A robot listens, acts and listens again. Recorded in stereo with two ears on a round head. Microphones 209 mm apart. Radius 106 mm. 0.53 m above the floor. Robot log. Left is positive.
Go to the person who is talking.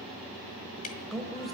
cmd yaw +30
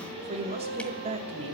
note: So it is at 30° right.
cmd yaw -30
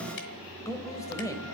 note: The woman speaking is now 15° left.
cmd yaw +15
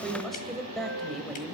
cmd fwd 1.0
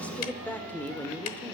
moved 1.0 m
note: The woman speaking is now 10° left.
cmd yaw +10
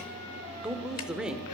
cmd fwd 1.0
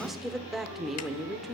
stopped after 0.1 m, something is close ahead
end: I am next to the woman speaking.